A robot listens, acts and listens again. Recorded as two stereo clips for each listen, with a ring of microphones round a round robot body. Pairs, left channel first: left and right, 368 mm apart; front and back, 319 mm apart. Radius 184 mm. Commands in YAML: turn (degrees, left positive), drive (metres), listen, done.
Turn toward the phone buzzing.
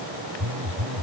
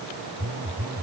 turn: -130
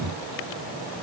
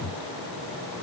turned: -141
turn: 10
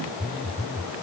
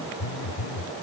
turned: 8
done: "Found it: a phone buzzing, straight ahead."